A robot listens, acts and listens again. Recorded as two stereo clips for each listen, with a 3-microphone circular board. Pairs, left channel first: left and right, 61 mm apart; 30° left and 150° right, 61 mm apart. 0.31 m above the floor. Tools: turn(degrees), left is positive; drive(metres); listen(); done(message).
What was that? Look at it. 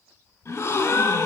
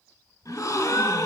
turn(degrees=55)
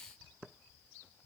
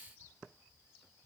done("I heard a gasp from this way, but can't make it out now.")